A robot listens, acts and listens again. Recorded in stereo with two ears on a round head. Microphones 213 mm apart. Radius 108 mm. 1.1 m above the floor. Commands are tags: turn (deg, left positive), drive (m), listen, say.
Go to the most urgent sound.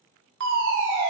<turn deg="-50"/>
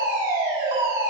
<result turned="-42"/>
<turn deg="-15"/>
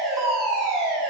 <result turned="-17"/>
<drive m="1.0"/>
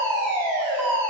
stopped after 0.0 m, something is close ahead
<turn deg="10"/>
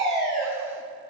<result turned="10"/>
<say>Blocked. The fire alarm is further on, straight ahead.</say>